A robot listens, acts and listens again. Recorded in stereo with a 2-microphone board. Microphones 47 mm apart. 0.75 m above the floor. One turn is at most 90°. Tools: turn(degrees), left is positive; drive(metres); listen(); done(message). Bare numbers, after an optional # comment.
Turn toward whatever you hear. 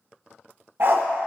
# The dog barking: about 50° right or 130° right.
turn(-50)
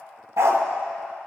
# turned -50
# So it is at 75° right.
turn(-75)
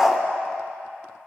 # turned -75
# The dog barking is now 10° right.
turn(-10)
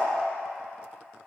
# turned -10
listen()
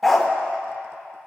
done("Found it: a dog barking, straight ahead.")